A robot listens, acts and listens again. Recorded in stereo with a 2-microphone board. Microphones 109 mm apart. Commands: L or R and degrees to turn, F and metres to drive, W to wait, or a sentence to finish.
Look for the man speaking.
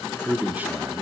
R15
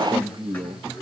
R125
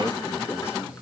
W
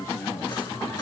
L30
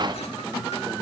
W
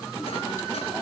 W
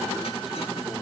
I heard a man speaking from this way, but can't make it out now.